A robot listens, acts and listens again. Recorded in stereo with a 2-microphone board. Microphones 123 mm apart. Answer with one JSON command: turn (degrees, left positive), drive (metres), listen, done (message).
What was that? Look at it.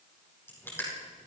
{"turn": 20}
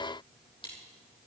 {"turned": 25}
{"listen": true}
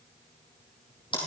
{"turn": 140}
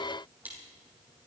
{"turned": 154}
{"turn": -15}
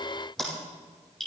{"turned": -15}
{"done": "Found it: crushing, straight ahead, over 4 m away."}